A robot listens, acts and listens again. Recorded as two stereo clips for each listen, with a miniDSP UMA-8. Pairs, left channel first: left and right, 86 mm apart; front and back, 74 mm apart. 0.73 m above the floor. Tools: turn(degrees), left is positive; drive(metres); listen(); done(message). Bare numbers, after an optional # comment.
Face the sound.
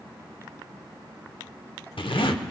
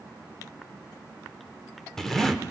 # The zipper: 85° left.
turn(85)
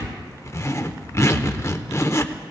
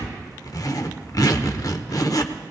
# The zipper is now 35° left.
turn(35)
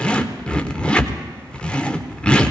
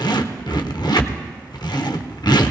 # The zipper is now 10° left.
turn(10)
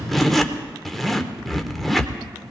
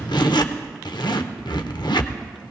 done("Found it: a zipper, straight ahead.")